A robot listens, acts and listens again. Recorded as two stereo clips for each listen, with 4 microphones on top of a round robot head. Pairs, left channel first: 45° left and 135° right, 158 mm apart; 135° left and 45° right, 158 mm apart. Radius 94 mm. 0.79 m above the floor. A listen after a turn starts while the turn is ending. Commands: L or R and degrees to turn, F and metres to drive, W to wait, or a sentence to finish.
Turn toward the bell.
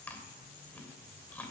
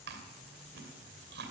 W
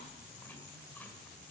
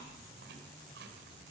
W
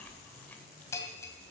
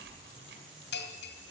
L120
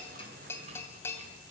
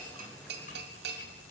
R30
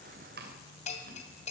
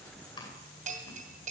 Found it: a bell, straight ahead.